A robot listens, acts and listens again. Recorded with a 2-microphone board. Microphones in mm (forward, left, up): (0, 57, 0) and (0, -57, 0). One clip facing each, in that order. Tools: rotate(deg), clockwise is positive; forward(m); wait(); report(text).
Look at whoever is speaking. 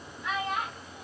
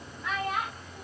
rotate(35)
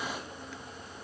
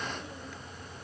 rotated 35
wait()
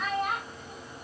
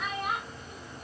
report("Facing the child speaking.")